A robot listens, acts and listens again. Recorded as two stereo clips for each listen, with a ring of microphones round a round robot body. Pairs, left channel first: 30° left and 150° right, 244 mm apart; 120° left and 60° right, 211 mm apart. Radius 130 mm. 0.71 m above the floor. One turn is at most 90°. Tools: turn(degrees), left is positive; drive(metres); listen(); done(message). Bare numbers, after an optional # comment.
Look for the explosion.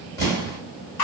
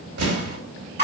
# The explosion: 45° right.
turn(-45)
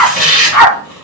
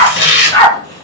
done("Facing where the explosion came from. I can't hear it now.")